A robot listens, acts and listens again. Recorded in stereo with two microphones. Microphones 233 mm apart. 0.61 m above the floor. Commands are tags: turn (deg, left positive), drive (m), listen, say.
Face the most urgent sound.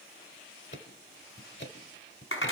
<listen/>
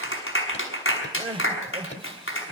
<turn deg="-25"/>
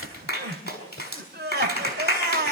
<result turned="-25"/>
<turn deg="-130"/>
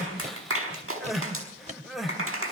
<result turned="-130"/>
<say>Found it: crying, straight ahead, 2 to 4 m away.</say>